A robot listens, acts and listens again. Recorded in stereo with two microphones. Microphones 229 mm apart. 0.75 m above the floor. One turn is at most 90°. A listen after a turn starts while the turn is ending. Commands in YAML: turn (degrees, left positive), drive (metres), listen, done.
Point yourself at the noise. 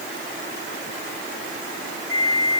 turn: 30
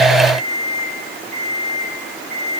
turn: 90
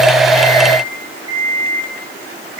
turn: 65
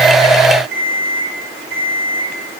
done: "Facing the alarm clock."